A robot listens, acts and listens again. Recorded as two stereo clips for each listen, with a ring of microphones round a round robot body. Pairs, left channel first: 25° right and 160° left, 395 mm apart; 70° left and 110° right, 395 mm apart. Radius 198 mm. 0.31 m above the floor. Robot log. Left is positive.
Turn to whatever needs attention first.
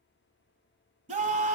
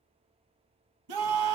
note: The scream: 130° right.
cmd yaw -130
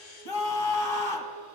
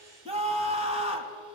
note: The scream is now 40° right.
cmd yaw -40
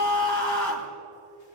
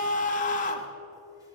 end: Facing the scream.